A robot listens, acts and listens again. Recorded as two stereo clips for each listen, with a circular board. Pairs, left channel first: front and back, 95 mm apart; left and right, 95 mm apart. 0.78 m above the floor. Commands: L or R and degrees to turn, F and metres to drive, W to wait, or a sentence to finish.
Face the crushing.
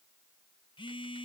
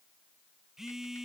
W
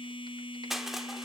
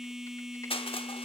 L95
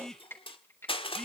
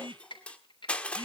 L15
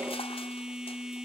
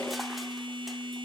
W
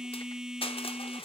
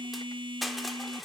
Facing the crushing.